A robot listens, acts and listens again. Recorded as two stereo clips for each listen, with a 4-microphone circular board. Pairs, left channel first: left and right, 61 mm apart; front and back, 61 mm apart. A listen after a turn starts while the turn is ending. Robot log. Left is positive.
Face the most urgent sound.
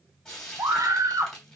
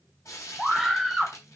note: The scream: 95° right.
cmd yaw -95
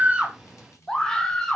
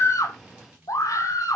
note: The scream is now 10° left.
cmd yaw +10
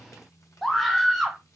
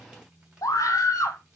end: Facing the scream, 1 to 2 m away.